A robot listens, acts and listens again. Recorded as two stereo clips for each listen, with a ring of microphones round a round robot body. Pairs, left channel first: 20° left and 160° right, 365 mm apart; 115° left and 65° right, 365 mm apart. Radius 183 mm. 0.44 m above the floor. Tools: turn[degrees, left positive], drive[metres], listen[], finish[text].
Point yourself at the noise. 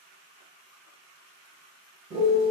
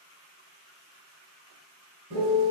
Thought: The piano: 85° right.
Action: turn[-85]
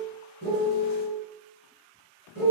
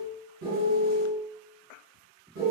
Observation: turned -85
Thought: The piano is now 20° right.
Action: turn[-20]
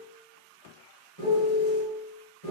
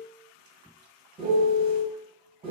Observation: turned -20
Action: finish[Facing the piano.]